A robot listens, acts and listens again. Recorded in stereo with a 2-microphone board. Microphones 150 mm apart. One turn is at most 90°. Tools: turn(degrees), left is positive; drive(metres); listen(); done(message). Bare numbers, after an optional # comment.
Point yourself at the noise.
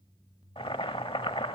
# The boiling: about 35° left or 145° left.
turn(35)
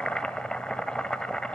done("Facing the boiling.")